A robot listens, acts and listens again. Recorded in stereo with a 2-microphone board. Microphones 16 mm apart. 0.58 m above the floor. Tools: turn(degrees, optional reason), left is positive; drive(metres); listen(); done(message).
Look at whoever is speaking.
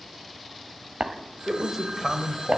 turn(degrees=-20, reason="The man speaking: about 20° right or 160° right.")
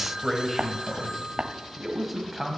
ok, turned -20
turn(degrees=-30)
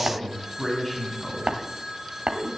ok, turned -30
turn(degrees=10, reason="So it is at 10° left.")
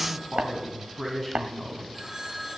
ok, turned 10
done("Found it: a man speaking, straight ahead, 2 to 4 m away.")